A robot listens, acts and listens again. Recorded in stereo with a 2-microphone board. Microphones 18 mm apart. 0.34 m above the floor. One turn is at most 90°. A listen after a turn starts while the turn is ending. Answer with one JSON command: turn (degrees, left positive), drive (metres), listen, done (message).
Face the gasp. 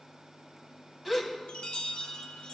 {"turn": 30}
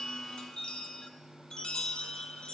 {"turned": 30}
{"listen": true}
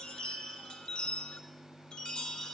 {"done": "I heard a gasp, but can't make it out now. It was about 25° right or 145° left."}